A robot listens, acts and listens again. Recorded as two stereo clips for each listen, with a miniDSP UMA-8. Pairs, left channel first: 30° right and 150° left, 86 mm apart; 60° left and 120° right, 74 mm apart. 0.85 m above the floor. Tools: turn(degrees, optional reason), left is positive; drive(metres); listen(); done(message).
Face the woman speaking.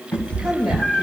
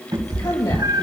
turn(degrees=65, reason="The woman speaking: 65° left.")
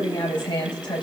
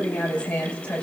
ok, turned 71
turn(degrees=-10, reason="The woman speaking is now 10° right.")
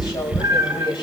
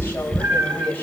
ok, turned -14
done("Facing the woman speaking.")